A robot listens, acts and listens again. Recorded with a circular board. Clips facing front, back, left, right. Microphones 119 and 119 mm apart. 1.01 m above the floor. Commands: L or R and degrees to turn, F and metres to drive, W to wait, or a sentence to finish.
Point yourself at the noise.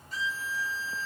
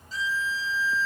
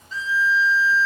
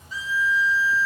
R15
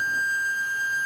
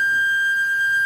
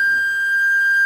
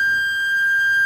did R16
Facing the violin.